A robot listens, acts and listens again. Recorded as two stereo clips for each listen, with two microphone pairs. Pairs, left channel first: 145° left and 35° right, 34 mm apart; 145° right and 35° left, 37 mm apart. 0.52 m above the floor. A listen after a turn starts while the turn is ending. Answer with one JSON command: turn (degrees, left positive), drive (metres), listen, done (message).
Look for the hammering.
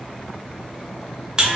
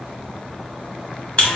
{"listen": true}
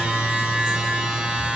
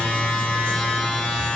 {"listen": true}
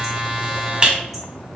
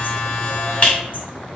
{"done": "I can't make out hammering, only a buzzer."}